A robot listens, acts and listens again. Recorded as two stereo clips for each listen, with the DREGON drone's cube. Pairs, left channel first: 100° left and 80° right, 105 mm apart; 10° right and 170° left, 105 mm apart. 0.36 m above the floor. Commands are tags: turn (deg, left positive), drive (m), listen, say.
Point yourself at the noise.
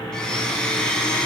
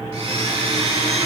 <turn deg="180"/>
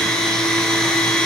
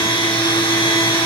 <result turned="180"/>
<turn deg="15"/>
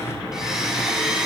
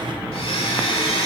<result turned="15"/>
<say>Found it: a blender, straight ahead, 1 to 2 m away.</say>